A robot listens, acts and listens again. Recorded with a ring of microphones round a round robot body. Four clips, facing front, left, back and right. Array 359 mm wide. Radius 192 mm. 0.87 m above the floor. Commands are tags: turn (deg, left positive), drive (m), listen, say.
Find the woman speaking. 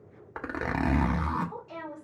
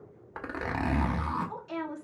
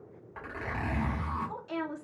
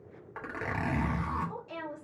<turn deg="135"/>
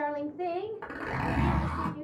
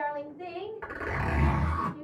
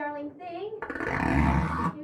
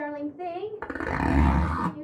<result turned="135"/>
<turn deg="-55"/>
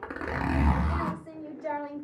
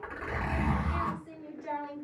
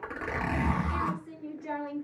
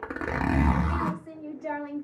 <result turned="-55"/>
<turn deg="-30"/>
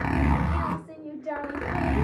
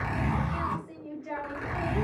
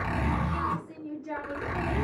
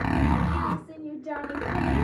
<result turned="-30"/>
<turn deg="-10"/>
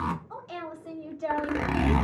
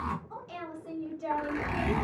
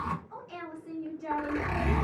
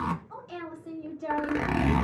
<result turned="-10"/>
<say>Found it: a woman speaking, straight ahead.</say>